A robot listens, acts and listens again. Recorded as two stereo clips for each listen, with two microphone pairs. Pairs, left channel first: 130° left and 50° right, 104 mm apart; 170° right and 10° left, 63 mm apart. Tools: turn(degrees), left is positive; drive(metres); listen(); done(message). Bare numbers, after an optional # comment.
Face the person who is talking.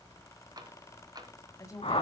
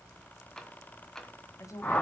# The woman speaking: straight behind.
turn(180)
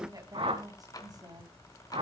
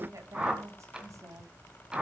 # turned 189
done("Found it: a woman speaking, straight ahead.")